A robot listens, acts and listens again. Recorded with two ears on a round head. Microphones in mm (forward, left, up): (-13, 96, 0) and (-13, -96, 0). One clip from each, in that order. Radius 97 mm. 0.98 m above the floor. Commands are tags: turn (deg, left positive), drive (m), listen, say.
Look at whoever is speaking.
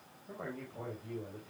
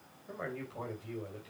<turn deg="-90"/>
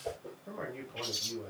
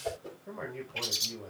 <say>Found it: a man speaking, straight ahead.</say>